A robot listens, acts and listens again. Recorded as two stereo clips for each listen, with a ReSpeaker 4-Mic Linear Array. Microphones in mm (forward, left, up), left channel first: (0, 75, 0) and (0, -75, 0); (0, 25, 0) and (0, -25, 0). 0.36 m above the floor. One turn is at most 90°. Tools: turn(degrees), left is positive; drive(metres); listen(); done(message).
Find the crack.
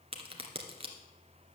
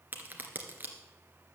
turn(degrees=-40)
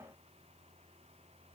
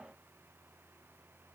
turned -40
listen()
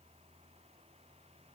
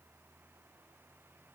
done("I heard a crack, but can't make it out now. It was about straight ahead or 100° right.")